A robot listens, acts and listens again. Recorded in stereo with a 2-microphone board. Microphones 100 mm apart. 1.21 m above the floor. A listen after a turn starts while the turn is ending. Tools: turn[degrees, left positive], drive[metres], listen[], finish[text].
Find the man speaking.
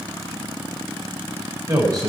Thought: The man speaking: about 35° right or 145° right.
Action: turn[-35]
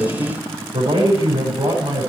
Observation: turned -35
Thought: So it is at 105° right.
Action: turn[-105]
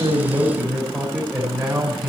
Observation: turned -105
Action: finish[Found it: a man speaking, straight ahead.]